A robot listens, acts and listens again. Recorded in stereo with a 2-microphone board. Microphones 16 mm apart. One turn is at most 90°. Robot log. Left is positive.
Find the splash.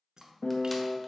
note: The splash: about 45° right or 135° right.
cmd yaw -45
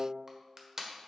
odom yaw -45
cmd idle
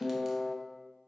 end: I heard a splash, but can't make it out now. It was about straight ahead or 90° right.